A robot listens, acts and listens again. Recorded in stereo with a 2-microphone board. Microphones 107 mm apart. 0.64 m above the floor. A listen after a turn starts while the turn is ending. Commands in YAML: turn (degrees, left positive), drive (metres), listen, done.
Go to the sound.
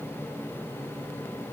listen: true
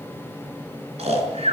turn: -90
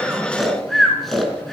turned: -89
drive: 1.0
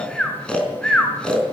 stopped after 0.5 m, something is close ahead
turn: 10
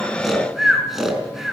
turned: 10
done: "Something is in my way. I am facing the snoring but have not reached it."